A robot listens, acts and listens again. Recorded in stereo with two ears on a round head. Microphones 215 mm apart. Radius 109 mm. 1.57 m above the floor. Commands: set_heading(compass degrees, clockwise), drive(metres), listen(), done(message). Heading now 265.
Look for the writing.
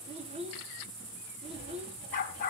set_heading(315)
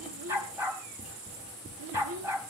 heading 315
done("Found it: writing, straight ahead, over 4 m away.")